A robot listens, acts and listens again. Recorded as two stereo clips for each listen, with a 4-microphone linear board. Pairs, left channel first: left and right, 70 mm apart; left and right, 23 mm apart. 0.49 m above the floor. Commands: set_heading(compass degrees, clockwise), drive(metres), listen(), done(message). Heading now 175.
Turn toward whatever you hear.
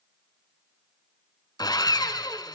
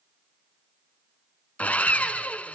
set_heading(85)
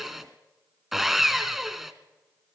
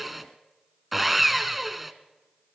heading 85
done("Found it: sawing, straight ahead.")